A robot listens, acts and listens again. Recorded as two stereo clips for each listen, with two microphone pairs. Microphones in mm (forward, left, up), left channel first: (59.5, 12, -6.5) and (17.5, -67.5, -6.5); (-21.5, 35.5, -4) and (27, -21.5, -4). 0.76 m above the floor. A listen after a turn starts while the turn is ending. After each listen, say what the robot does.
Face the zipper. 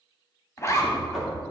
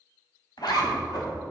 Turn 115° left.
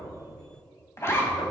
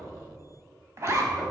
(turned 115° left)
Found it: a zipper, straight ahead, 1 to 2 m away.